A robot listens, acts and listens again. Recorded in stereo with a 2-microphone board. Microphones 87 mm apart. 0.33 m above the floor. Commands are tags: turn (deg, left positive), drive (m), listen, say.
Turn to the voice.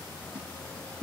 <listen/>
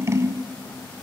<listen/>
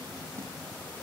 <say>I can't make out anyone speaking to turn to.</say>